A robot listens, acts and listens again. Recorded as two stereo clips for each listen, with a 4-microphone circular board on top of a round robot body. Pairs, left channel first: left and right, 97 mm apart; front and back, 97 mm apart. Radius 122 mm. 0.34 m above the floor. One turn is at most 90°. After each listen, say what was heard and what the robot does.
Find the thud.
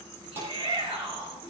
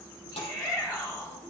The thud: 20° right. Turn 20° right.
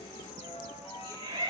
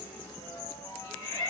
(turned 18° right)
I heard a thud from this way, but can't make it out now.